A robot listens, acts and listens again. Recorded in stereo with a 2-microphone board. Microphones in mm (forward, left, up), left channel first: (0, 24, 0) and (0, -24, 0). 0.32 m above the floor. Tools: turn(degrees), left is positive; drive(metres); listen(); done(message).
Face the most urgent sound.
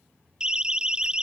turn(degrees=-15)
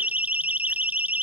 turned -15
turn(degrees=-150)
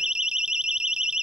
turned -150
turn(degrees=-15)
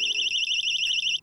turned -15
done("Facing the siren.")